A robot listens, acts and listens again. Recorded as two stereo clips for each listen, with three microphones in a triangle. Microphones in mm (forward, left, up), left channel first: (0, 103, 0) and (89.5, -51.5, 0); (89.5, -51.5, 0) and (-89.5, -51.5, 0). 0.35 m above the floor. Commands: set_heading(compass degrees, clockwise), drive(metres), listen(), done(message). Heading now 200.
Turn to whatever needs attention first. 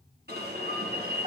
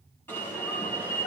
set_heading(280)
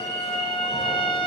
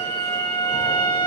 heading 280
listen()
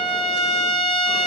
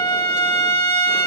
listen()
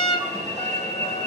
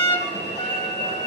set_heading(290)
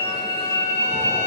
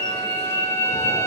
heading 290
done("Found it: an alarm, straight ahead.")